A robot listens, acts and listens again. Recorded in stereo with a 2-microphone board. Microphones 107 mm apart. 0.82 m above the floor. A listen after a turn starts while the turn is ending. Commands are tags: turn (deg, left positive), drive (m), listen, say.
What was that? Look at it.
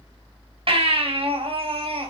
<turn deg="-60"/>
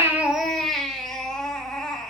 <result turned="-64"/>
<say>Found it: a baby crying, straight ahead.</say>